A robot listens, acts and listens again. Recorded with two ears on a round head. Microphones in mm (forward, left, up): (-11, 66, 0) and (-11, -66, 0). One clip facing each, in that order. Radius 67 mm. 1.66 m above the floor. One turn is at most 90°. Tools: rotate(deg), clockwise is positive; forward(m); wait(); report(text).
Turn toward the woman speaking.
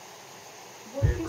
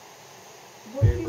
rotate(-15)
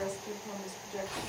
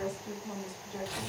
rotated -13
rotate(-20)
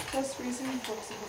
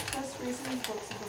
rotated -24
rotate(-15)
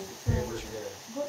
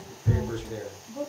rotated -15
rotate(-30)
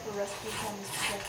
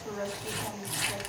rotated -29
rotate(-30)
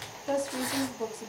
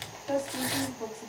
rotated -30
rotate(-90)
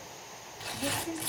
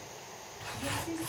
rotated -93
rotate(-45)
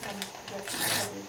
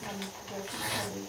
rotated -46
report("Found it: a woman speaking, straight ahead, 1 to 2 m away.")